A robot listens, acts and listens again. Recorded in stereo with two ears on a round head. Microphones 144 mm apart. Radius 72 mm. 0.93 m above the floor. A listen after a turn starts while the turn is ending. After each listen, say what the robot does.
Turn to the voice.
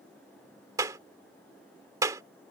Keep listening.
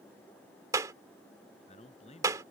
Turn 40° left.
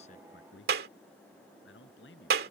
Turn 100° left.
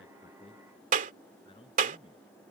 Turn 30° left.
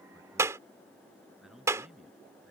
Facing the man speaking.